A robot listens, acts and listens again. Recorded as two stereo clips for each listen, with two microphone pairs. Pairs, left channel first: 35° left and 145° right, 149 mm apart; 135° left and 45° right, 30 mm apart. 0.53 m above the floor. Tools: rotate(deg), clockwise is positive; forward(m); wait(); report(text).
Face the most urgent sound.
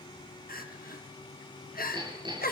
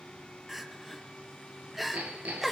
rotate(-40)
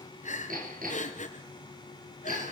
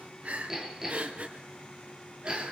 report("Found it: crying, straight ahead.")